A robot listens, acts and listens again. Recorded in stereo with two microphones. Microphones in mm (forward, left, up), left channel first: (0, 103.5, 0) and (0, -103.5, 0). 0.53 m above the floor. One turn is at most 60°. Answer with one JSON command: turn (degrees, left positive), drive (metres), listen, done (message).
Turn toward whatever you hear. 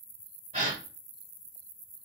{"turn": -35}
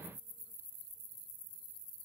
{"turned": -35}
{"listen": true}
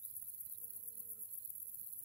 {"done": "I heard a gasp, but can't make it out now. It was about straight ahead or 110° right."}